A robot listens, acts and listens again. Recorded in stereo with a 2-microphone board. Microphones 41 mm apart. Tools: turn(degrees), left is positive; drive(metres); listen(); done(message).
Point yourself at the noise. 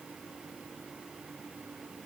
listen()
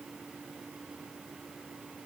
listen()
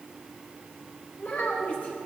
turn(degrees=45)
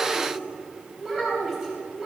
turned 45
turn(degrees=-10)
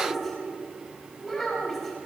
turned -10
done("Found it: a child speaking, straight ahead.")